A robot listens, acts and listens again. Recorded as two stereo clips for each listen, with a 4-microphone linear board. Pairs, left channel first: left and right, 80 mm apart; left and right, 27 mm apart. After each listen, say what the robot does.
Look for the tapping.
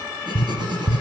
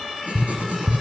Turn 30° right.
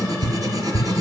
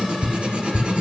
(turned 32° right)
Turn 25° left.
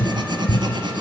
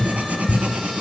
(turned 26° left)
Found it: tapping, straight ahead.